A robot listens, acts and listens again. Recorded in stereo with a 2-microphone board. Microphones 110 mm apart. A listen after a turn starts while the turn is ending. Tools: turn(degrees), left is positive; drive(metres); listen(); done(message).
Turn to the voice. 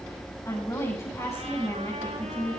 turn(degrees=30)
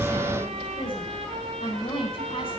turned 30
turn(degrees=125)
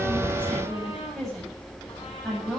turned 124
done("Found it: a woman speaking, straight ahead, over 4 m away.")